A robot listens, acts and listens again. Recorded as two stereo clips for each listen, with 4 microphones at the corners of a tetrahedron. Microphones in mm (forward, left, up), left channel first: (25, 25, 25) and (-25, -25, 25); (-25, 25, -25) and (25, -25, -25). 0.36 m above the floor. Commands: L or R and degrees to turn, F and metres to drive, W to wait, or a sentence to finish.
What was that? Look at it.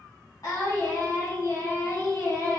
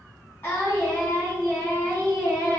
L75
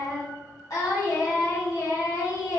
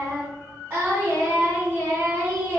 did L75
L10
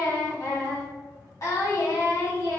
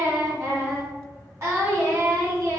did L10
Found it: singing, straight ahead.